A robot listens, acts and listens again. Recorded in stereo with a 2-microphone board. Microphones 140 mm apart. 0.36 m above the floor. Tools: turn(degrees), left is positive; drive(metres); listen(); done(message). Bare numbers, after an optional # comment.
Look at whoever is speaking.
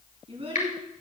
# The child speaking: about 45° right or 135° right.
turn(-45)
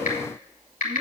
listen()
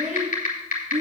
# So it is at 60° right.
turn(-60)
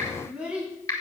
done("Found it: a child speaking, straight ahead.")